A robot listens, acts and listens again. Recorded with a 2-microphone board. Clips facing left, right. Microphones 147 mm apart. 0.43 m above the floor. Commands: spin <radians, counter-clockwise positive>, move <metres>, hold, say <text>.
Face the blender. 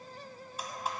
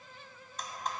spin 0.52
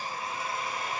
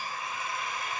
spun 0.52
spin 2.44
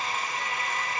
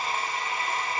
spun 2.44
spin -0.70
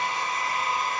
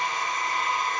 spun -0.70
say Found it: a blender, straight ahead, 1 to 2 m away.